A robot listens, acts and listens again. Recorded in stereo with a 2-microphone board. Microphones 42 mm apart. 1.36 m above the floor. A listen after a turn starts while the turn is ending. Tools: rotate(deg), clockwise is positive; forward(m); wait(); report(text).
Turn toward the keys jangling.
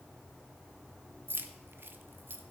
rotate(60)
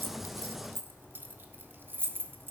rotate(60)
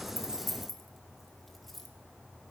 report("Found it: keys jangling, straight ahead, 1 to 2 m away.")